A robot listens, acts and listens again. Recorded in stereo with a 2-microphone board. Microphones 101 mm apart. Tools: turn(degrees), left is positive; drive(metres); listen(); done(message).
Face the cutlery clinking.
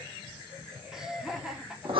listen()
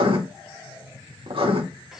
listen()
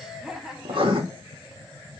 done("I can't make out cutlery clinking, only laughter and writing.")